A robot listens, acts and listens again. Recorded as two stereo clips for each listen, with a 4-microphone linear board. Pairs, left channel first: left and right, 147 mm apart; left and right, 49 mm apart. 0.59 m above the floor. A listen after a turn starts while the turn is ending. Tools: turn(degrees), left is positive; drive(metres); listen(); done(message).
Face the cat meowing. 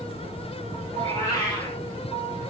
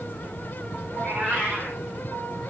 turn(degrees=25)
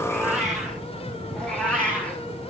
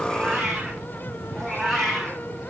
turn(degrees=30)
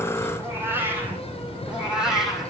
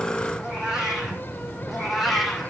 done("Facing the cat meowing, 2 to 4 m away.")